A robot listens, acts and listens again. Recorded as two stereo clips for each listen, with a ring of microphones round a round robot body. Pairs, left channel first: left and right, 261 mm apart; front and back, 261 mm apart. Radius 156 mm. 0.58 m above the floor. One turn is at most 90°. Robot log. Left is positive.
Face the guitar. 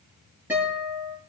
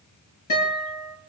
end: Found it: a guitar, straight ahead, over 4 m away.